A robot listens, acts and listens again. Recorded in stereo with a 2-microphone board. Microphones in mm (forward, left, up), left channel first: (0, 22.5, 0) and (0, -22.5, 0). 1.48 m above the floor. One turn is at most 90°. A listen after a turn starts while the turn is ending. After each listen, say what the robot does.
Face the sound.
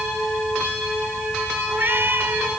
Turn 55° right.
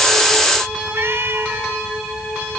Turn 70° right.
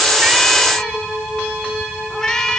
Turn 15° left.
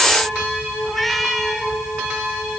Facing the cat meowing.